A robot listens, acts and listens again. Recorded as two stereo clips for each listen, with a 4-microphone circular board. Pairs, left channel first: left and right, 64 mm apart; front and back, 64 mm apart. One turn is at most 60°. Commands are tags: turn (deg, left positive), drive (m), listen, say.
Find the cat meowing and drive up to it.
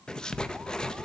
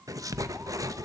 <listen/>
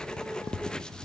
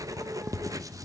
<listen/>
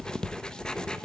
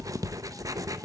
<say>I can't make out a cat meowing, only writing.</say>